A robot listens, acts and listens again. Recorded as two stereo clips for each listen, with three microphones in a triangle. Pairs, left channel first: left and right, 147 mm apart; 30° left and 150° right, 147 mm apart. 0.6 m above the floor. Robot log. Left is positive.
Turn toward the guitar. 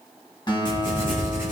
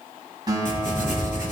note: The guitar: 150° left.
cmd yaw +150
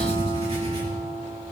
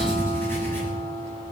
note: The guitar is now 45° left.
cmd yaw +45
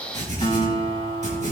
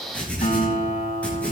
note: The guitar is now 35° left.
cmd yaw +35
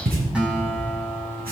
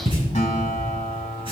end: Found it: a guitar, straight ahead.